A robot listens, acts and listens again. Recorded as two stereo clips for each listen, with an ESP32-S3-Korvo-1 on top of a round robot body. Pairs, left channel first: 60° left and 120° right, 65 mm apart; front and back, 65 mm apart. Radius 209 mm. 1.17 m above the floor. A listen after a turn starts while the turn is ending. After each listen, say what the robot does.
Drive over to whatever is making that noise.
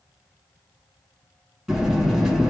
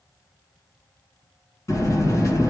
Turn 40° right.
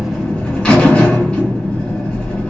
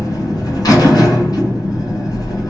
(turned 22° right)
Turn 15° right.
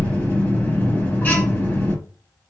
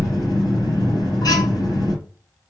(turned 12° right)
Drive 1.0 m forward.
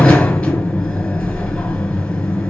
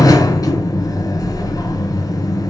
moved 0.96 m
Turn 10° right.
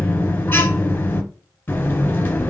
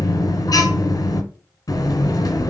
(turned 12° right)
Drive 1.0 m forward.
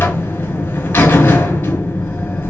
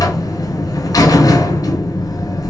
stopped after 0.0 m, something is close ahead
Arrived at the buzzer, straight ahead.